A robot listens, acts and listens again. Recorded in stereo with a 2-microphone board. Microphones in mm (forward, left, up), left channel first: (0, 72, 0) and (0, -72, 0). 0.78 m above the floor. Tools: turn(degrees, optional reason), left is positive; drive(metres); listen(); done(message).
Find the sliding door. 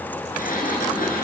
turn(degrees=90)
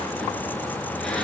listen()
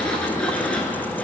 done("Found it: a sliding door, straight ahead, over 4 m away.")